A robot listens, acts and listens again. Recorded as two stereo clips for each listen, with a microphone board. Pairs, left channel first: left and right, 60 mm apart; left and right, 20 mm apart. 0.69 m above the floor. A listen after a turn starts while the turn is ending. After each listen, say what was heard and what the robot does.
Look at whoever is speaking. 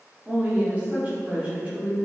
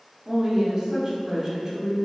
The woman speaking: about 25° right or 155° right. Turn 25° right.
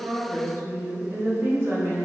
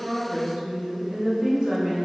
So it is at 125° right. Turn 125° right.
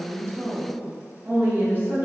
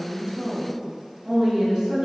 The woman speaking is now 40° right. Turn 40° right.
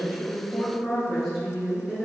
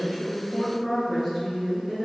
Facing the woman speaking.